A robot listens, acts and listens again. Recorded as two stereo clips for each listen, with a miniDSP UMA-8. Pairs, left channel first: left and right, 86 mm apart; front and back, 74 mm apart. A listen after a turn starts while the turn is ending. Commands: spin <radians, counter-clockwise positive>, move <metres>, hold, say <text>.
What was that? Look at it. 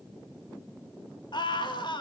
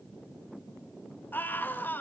spin 1.13
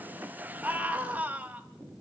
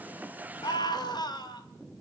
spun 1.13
spin -0.26
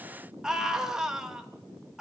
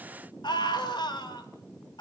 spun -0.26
say Found it: a scream, straight ahead, 2 to 4 m away.